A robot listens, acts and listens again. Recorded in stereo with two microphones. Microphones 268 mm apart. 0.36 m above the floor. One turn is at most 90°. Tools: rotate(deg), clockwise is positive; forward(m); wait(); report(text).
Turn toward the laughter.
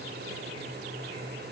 wait()
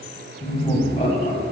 rotate(-30)
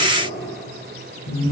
rotate(-90)
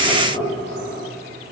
rotate(-20)
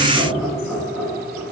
report("Found it: laughter, straight ahead.")